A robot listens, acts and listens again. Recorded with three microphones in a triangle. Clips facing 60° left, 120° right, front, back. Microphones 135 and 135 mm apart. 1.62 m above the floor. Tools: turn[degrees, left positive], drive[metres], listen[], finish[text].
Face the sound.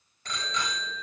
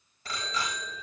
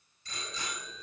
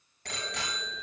Thought: The bicycle bell: 155° left.
Action: turn[155]
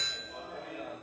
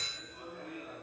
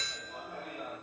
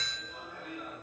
Thought: The bicycle bell is now 50° left.
Action: turn[50]
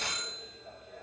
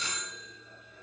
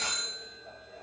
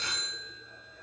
Thought: The bicycle bell is now 15° left.
Action: turn[15]
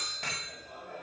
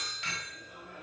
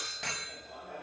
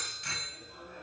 Action: finish[Found it: a bicycle bell, straight ahead.]